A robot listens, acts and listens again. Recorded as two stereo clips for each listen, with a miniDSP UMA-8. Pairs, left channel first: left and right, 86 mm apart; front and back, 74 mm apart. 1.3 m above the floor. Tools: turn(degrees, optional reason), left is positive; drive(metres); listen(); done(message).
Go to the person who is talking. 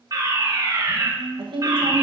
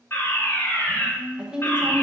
turn(degrees=-105, reason="The woman speaking: 105° right.")
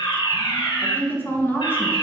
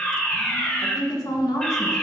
turn(degrees=25, reason="The woman speaking is now 25° left.")
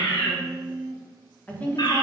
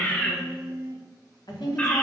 turn(degrees=20, reason="The woman speaking is now 20° left.")
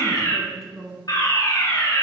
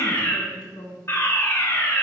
drive(metres=1.0)
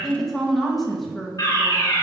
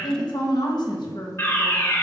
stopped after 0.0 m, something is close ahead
done("Something is in my way. I am facing the woman speaking but have not reached it.")